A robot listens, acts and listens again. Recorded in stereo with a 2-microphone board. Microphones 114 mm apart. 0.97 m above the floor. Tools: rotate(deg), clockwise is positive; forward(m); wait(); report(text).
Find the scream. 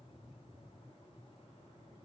wait()
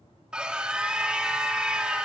rotate(30)
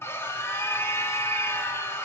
rotate(-20)
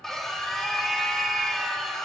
report("Facing the scream.")